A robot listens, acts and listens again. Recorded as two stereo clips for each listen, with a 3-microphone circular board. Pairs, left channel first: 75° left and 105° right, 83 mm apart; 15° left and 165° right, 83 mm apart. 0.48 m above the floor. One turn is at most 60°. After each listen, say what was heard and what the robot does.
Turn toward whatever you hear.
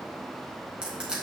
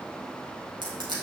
The crushing: 175° left. Turn 60° left.
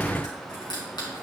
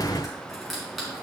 The crushing is now 105° left. Turn 60° left.
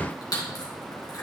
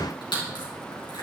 The crushing is now 35° left. Turn 35° left.
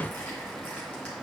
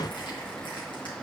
Keep listening.
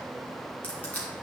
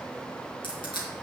Found it: crushing, straight ahead.